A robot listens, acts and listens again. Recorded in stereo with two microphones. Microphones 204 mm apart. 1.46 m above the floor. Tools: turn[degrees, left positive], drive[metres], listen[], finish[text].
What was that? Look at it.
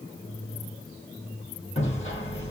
Thought: The hammering: about 30° left or 150° left.
Action: turn[30]
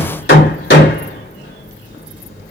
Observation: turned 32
Thought: So it is at 120° left.
Action: turn[120]
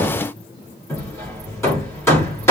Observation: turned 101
Thought: The hammering is now 15° left.
Action: turn[15]
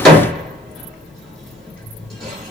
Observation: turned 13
Action: finish[Facing the hammering, 2 to 4 m away.]